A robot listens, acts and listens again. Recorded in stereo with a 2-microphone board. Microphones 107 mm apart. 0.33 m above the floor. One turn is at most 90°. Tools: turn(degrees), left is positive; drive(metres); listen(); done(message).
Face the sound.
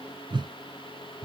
turn(degrees=-50)
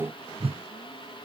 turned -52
turn(degrees=-75)
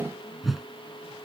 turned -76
done("Facing the whoosh.")